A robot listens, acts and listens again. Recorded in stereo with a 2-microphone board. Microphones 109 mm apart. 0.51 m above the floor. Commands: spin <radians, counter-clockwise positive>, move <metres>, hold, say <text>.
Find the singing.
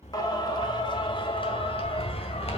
spin 0.70
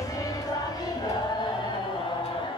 spin 0.79
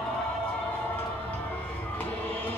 spin 0.17
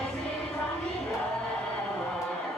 say Facing the singing, 2 to 4 m away.